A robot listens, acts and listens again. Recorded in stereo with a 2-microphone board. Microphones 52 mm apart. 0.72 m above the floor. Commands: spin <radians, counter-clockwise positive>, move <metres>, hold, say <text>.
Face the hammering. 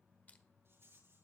hold
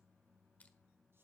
hold
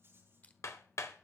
spin 1.31
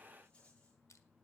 hold
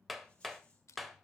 say Facing the hammering, 1 to 2 m away.